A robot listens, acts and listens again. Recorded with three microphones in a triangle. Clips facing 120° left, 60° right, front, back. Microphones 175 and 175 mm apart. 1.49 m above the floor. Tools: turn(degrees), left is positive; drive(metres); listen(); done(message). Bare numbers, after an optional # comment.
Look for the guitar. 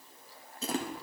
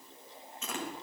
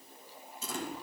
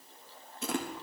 listen()
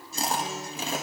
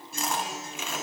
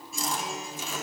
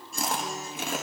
# The guitar: 90° right.
turn(-90)
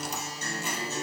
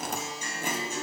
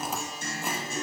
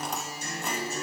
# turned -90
# The guitar is now 15° left.
turn(15)
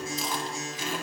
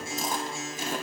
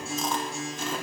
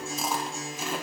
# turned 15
done("Facing the guitar, 2 to 4 m away.")